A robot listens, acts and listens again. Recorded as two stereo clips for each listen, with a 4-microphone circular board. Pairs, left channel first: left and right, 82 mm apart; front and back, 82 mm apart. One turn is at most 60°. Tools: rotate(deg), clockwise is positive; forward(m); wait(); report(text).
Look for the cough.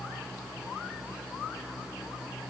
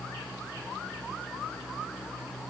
wait()
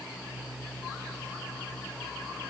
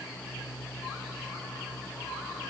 wait()
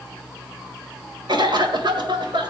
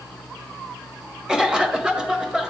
rotate(60)
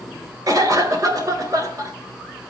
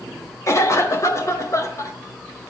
rotate(45)
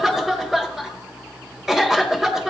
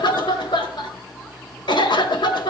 report("Facing the cough.")